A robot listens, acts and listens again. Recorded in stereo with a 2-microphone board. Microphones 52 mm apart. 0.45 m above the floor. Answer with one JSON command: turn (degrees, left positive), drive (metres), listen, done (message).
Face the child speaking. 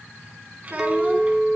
{"turn": -30}
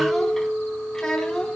{"turn": 15}
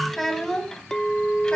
{"turn": 10}
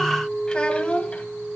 {"turn": 25}
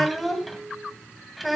{"done": "Facing the child speaking."}